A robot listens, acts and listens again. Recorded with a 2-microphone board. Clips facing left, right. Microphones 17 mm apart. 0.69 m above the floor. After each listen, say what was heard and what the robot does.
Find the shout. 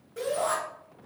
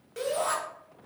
The shout: about 60° right or 120° right. Turn 60° right.
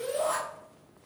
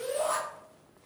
So it is at 10° right. Turn 10° right.
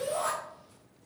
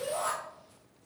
Found it: a shout, straight ahead, 1 to 2 m away.